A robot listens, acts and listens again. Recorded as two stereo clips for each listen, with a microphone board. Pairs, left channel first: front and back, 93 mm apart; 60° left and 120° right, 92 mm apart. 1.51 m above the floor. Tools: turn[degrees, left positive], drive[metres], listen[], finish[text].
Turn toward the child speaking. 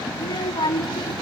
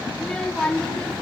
Thought: The child speaking: 15° right.
Action: turn[-15]
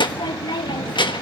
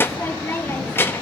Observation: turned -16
Action: finish[Facing the child speaking, 1 to 2 m away.]